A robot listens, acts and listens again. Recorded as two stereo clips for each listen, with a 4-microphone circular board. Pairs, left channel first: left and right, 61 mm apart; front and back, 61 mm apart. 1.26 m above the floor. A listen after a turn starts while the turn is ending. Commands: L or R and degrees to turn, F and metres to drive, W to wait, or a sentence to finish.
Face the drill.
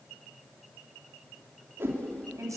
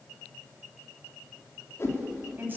W
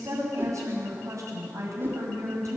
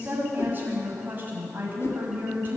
W
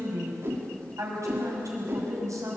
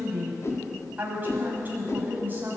I can't make out a drill, only a whoosh and a woman speaking.